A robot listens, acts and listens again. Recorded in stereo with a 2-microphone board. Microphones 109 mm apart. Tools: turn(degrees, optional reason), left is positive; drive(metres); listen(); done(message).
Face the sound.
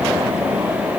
listen()
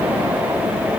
listen()
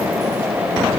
done("I can't make out anything.")